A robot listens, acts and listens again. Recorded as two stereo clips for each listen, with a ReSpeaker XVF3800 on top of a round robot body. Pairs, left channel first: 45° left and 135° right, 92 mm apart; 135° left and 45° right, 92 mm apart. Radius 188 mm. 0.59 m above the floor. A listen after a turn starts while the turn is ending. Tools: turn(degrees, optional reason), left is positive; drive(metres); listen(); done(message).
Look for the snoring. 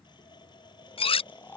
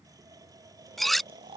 turn(degrees=-25, reason="The snoring: 25° right.")
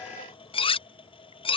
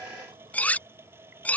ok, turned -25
listen()
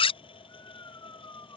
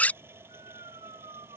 turn(degrees=-10, reason="The snoring is now 10° right.")
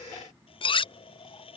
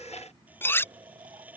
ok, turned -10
listen()
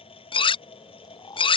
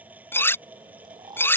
done("Facing the snoring.")